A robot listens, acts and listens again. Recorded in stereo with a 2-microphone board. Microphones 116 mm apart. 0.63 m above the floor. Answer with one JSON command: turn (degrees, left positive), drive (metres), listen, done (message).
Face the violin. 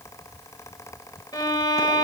{"turn": 40}
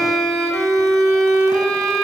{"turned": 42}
{"done": "Facing the violin."}